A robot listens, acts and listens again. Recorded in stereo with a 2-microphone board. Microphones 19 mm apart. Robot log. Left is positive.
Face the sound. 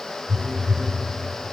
note: The phone buzzing: about 70° right or 110° right.
cmd yaw -70
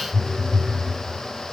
note: So it is at 10° right.
cmd yaw -10
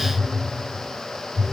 end: Facing the phone buzzing, 1 to 2 m away.